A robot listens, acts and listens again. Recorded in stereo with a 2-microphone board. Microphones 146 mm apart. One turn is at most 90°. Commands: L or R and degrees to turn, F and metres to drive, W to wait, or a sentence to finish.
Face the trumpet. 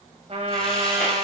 R45
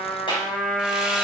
Facing the trumpet, 1 to 2 m away.